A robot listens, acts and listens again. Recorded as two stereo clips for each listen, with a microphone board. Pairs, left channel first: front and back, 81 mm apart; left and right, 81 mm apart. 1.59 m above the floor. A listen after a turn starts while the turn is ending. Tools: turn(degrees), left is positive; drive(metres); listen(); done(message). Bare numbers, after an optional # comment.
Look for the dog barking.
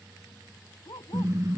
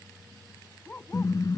# The dog barking: 20° left.
turn(20)
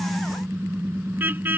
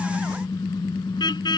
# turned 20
listen()
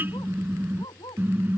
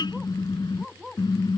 done("Facing the dog barking.")